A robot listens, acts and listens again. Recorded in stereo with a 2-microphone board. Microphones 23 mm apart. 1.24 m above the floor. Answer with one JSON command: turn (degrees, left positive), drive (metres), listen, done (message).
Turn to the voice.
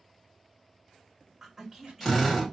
{"turn": -20}
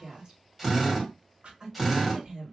{"turn": -145}
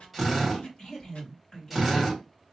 {"turn": 35}
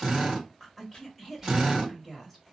{"turn": 10}
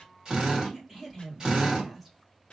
{"done": "Found it: a woman speaking, straight ahead, 2 to 4 m away."}